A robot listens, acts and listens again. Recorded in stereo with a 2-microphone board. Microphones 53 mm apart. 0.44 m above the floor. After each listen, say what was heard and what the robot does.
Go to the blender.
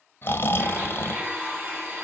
The blender: about 40° right or 140° right. Turn 40° right.
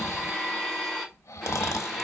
Drive 1.0 m forward.
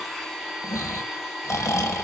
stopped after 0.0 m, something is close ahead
Blocked. The blender is further on, straight ahead.